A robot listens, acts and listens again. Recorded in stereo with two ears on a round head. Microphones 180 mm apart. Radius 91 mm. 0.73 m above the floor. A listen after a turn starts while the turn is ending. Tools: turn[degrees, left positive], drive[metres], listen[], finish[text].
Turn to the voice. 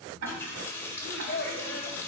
Thought: The child speaking: about 45° left or 135° left.
Action: turn[45]
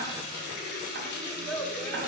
Action: finish[Found it: a child speaking, straight ahead, 1 to 2 m away.]